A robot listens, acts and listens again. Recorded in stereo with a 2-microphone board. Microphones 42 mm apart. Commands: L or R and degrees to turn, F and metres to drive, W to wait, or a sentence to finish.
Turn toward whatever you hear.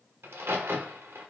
R75
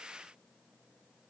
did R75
W
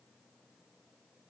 I heard a crack, but can't make it out now. It was about straight ahead or 30° right.